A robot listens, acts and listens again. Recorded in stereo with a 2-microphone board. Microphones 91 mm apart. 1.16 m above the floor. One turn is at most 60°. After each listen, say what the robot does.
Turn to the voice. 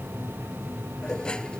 Keep listening.
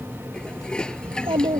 Turn 60° right.
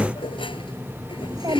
Turn 40° right.
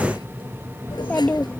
Turn 20° left.
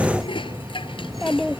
Facing the child speaking.